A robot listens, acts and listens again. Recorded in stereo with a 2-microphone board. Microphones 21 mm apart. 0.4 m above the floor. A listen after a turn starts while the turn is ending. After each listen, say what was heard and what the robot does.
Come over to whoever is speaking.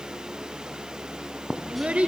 Turn 90° right.
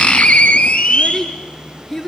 So it is at 15° left. Turn 15° left.
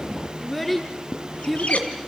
Drive 1.0 m forward.
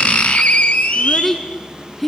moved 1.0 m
Drive 1.0 m forward.
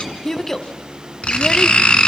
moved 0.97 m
The child speaking is now 15° left. Turn 15° left.
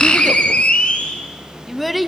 Drive 1.0 m forward.
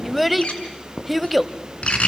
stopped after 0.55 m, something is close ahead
I am next to the child speaking.